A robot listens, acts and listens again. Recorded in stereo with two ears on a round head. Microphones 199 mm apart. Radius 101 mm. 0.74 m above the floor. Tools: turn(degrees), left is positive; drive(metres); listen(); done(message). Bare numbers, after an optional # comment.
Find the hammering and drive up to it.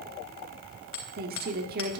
# The hammering: about 60° left or 120° left.
turn(60)
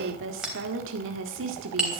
drive(1.0)
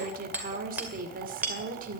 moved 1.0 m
drive(1.0)
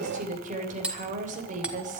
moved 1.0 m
drive(1.0)
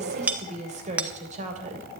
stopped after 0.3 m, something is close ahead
done("Arrived at the hammering, straight ahead.")